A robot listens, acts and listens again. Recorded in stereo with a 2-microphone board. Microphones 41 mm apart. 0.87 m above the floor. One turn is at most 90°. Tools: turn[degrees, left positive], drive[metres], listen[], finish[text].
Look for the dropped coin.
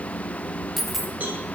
Action: turn[30]
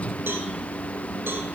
Action: listen[]
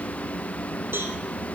Action: finish[I heard a dropped coin, but can't make it out now. It was about 30° right or 150° left.]